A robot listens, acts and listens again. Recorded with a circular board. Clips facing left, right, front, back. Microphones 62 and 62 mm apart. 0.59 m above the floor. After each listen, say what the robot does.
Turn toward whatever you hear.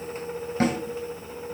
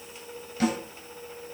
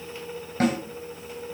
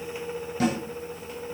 Turn 45° left.
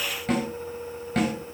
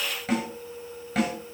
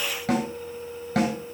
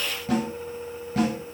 Found it: a snare drum, straight ahead, over 4 m away.